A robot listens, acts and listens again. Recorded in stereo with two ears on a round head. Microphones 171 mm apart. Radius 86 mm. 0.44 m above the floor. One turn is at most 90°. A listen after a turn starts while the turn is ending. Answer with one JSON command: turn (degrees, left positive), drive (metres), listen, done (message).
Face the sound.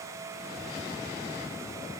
{"listen": true}
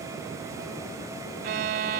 {"turn": -55}
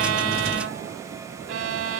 {"turn": -70}
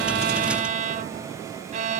{"turn": -40}
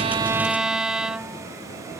{"done": "Facing the violin."}